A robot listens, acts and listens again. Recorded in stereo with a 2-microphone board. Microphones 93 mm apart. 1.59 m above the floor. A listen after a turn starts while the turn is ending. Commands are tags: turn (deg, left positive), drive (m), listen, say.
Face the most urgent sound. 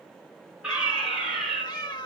<turn deg="-30"/>
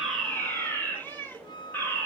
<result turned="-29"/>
<turn deg="20"/>
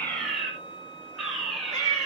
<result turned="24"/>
<say>Found it: a fire alarm, straight ahead, over 4 m away.</say>